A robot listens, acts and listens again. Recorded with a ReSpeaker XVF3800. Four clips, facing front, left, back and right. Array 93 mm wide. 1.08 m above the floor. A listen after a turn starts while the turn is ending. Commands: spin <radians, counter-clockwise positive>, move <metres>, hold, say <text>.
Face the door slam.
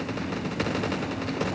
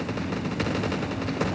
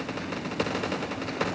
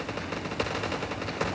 hold
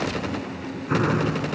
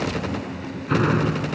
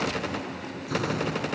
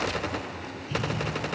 spin 0.96
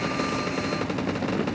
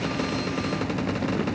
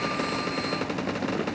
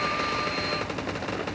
say I heard a door slam from this way, but can't make it out now.